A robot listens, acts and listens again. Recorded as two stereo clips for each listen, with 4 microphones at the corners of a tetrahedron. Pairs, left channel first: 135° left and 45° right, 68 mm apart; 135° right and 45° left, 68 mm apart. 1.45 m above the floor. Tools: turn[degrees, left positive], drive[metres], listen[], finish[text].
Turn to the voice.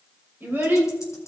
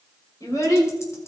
Thought: The child speaking: 105° right.
Action: turn[-105]
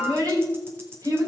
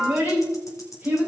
Thought: The child speaking is now 15° right.
Action: turn[-15]
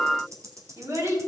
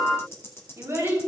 Action: finish[Facing the child speaking.]